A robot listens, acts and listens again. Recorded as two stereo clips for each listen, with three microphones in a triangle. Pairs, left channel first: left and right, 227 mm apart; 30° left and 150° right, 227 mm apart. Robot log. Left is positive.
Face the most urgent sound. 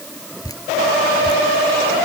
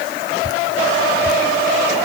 cmd idle
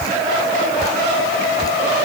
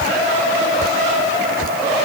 cmd idle
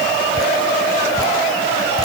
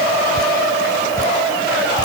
end: I can't make out anything urgent to turn to.